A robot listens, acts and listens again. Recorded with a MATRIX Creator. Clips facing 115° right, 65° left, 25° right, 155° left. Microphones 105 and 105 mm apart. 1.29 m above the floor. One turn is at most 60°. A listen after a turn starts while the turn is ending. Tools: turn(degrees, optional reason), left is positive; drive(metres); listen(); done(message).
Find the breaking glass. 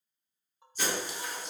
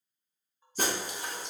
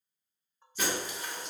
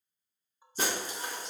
turn(degrees=60, reason="The breaking glass: 105° left.")
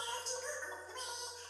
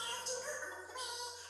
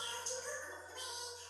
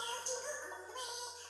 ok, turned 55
turn(degrees=50, reason="Nothing new. It was at 50° left.")
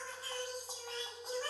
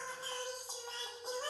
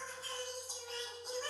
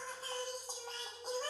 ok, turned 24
turn(degrees=25, reason="Nothing new. It was at 25° left.")
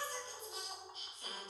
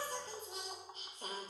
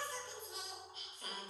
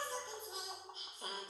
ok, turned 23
done("I heard breaking glass from this way, but can't make it out now.")